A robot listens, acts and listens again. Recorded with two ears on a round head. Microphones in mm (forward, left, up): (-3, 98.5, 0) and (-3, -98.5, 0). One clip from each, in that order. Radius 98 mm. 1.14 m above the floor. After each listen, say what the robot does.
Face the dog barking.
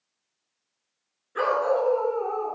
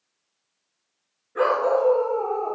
Turn 65° left.
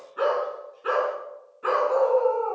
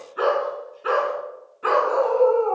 Turn 15° right.
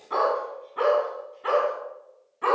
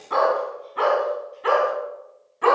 Turn 10° right.
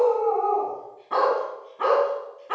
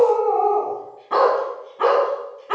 Found it: a dog barking, straight ahead.